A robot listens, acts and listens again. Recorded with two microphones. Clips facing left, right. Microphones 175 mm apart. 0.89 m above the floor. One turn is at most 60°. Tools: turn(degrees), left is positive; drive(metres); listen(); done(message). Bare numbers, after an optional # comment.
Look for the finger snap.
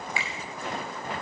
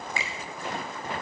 # The finger snap: about 40° right or 140° right.
turn(-40)
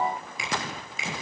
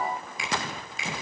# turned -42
done("Facing the finger snap.")